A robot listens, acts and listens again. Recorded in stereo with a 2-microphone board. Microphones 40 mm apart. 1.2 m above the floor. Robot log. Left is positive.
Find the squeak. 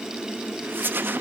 note: The squeak: about 60° right or 120° right.
cmd yaw -60
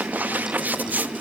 note: So it is at 50° right.
cmd yaw -50
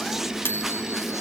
cmd idle
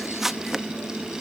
end: Found it: a squeak, straight ahead, under 1 m away.